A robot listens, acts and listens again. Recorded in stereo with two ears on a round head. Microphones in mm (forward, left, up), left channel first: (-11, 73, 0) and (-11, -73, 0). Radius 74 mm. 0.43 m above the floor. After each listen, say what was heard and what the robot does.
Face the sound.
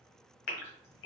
The gasp: about 65° left or 115° left. Turn 65° left.
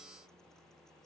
Keep listening.
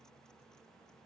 I heard a gasp, but can't make it out now. It was about straight ahead or 50° left.